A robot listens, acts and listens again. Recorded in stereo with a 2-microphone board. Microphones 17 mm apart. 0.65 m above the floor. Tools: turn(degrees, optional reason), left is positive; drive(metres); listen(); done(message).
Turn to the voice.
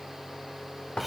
listen()
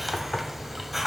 listen()
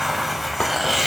done("I can't make out anyone speaking, only a hiss.")